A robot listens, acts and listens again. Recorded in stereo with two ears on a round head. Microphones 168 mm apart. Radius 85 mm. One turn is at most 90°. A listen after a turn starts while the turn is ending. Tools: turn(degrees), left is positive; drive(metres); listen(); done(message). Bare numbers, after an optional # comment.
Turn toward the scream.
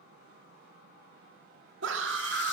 turn(-90)
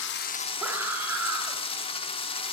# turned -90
# So it is at 10° right.
turn(-10)
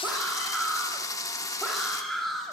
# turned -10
done("Facing the scream.")